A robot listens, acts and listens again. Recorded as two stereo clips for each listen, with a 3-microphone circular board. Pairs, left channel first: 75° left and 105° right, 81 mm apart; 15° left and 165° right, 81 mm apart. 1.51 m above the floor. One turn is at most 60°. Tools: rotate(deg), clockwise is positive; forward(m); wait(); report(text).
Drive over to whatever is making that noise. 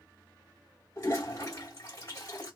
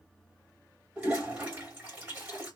rotate(-60)
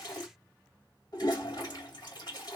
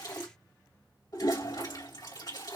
rotate(-45)
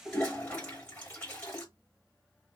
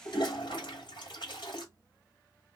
forward(1.0)
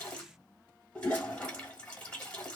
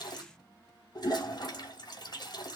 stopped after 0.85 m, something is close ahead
report("Arrived at the toilet flushing, straight ahead.")